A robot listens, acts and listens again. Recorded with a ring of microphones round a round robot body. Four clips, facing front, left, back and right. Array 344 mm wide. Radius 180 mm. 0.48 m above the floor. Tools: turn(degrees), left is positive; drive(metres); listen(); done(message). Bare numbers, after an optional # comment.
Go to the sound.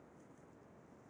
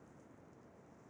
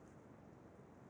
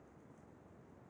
listen()
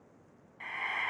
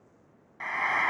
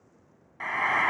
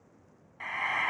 # The frying: 165° left.
turn(165)
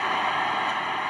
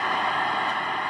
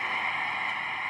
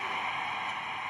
# The frying is now 50° left.
turn(50)
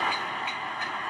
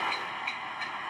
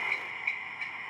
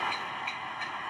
drive(1.0)
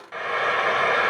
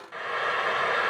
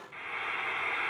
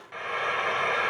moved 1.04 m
drive(1.0)
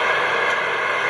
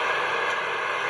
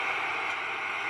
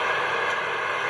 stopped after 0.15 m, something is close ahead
done("Arrived at the frying, straight ahead.")